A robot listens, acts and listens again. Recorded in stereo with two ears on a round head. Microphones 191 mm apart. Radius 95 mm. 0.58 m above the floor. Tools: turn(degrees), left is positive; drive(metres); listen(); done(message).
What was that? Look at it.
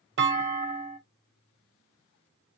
turn(degrees=-60)
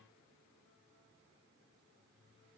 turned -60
listen()
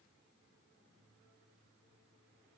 done("I heard a clunk, but can't make it out now. It was about straight ahead or 60° right.")